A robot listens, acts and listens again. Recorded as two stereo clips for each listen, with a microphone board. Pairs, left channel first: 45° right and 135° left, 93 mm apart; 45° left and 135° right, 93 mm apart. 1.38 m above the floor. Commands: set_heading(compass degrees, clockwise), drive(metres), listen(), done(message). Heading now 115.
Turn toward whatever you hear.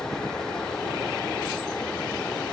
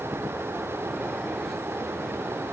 listen()
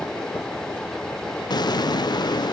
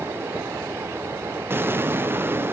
set_heading(190)
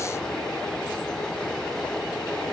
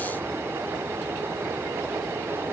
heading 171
set_heading(186)
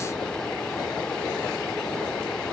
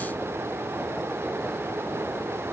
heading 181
done("Facing where the explosion came from. I can't hear it now.")